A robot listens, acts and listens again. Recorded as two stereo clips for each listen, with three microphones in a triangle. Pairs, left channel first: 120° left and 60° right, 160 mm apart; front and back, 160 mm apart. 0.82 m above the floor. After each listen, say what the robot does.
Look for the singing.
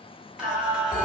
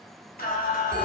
Turn 25° left.
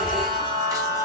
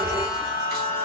Turn 10° left.
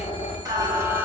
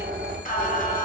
Turn 15° left.
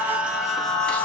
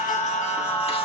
Turn 40° left.
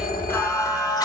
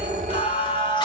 Turn 55° left.
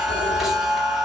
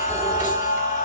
Turn 30° left.
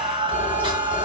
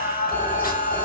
Found it: singing, straight ahead, 1 to 2 m away.